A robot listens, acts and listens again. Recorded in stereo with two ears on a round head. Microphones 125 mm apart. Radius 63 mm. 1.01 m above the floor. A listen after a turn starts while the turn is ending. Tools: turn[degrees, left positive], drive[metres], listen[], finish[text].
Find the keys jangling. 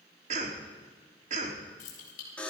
Thought: The keys jangling: about 55° left or 125° left.
Action: turn[55]
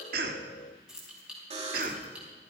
Thought: So it is at 10° right.
Action: turn[-10]
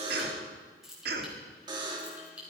Thought: The keys jangling is now 10° right.
Action: turn[-10]
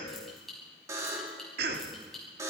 Action: finish[Found it: keys jangling, straight ahead.]